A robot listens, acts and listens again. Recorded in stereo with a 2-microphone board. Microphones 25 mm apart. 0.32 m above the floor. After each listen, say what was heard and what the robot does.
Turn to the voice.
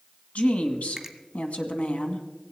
The woman speaking: about 65° left or 115° left. Turn 65° left.
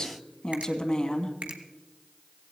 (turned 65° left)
So it is at 35° left. Turn 35° left.
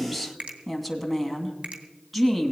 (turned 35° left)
Facing the woman speaking.